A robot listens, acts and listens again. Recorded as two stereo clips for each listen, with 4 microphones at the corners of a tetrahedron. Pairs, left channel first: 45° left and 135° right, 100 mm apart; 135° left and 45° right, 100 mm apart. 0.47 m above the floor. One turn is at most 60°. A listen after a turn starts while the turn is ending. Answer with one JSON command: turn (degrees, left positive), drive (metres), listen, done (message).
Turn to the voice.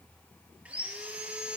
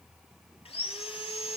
{"listen": true}
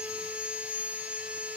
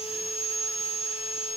{"listen": true}
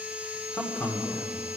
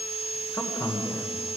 {"turn": 60}
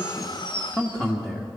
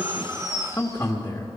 {"turn": 60}
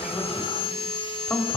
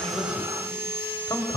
{"turn": 60}
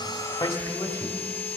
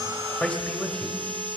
{"turn": 50}
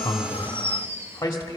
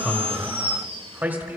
{"turn": 10}
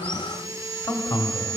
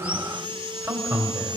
{"done": "Facing the man speaking."}